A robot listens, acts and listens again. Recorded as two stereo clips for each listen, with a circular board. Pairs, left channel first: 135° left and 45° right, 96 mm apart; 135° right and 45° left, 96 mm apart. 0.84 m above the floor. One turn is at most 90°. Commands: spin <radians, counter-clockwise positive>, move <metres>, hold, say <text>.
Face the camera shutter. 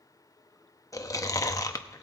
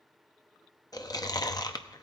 hold
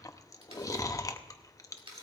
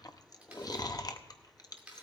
spin -0.52
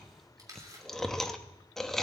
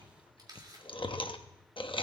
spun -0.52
say Facing the camera shutter.